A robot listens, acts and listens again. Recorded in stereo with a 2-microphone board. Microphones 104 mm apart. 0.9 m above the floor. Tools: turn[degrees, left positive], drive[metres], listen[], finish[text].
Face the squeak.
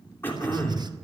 Action: listen[]
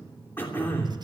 Action: listen[]
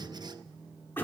Action: finish[I can't make out a squeak to turn to.]